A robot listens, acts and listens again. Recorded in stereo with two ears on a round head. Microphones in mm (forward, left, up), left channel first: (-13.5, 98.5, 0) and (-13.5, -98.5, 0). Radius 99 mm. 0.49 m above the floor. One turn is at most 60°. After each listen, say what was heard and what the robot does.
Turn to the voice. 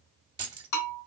Keep listening.
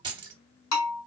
Keep listening.
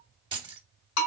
I can't make out anyone speaking, only keys jangling and a bell.